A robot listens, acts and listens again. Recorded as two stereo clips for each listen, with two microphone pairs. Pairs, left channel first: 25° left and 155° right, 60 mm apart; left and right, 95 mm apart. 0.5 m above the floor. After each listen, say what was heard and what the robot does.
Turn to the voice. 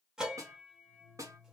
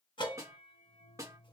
Keep listening.
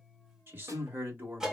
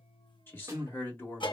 The man speaking: 155° left. Turn 155° left.
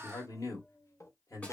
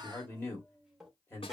The man speaking is now 25° left. Turn 25° left.
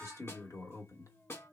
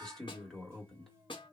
Facing the man speaking.